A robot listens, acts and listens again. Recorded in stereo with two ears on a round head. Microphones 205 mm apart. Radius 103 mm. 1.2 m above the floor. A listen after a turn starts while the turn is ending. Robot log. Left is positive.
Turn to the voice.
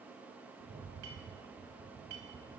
cmd idle
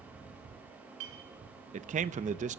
note: The man speaking: about 30° right or 150° right.
cmd yaw -30
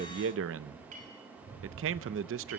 note: So it is at 120° right.
cmd yaw -120
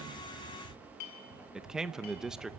end: Found it: a man speaking, straight ahead.